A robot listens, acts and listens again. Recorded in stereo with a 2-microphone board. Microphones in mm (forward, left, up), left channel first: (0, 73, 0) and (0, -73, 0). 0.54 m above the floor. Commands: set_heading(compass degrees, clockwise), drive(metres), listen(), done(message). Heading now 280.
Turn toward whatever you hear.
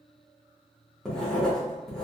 set_heading(250)
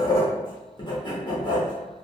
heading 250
set_heading(105)
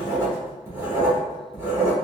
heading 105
set_heading(125)
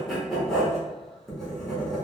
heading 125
done("Facing the writing.")